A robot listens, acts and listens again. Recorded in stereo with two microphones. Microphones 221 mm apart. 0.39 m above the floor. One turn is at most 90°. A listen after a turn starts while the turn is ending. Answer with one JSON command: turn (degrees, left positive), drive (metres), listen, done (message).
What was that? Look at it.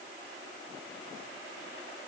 {"listen": true}
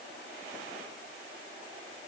{"listen": true}
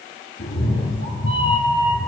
{"turn": 70}
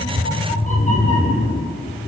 {"turn": 30}
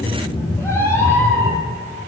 {"turn": 10}
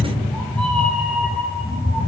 {"done": "Facing the cat meowing."}